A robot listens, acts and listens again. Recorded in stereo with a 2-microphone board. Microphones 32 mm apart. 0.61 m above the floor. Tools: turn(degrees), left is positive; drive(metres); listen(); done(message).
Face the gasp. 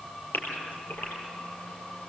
turn(degrees=90)
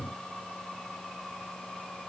done("I heard a gasp from this way, but can't make it out now.")